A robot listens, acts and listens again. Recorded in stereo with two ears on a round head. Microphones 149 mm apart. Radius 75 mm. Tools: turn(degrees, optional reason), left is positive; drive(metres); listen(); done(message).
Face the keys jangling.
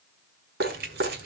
turn(degrees=-70, reason="The keys jangling: about 70° right or 110° right.")
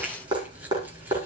listen()
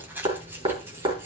turn(degrees=-15, reason="So it is at 15° right.")
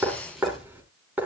listen()
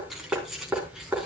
done("Found it: keys jangling, straight ahead.")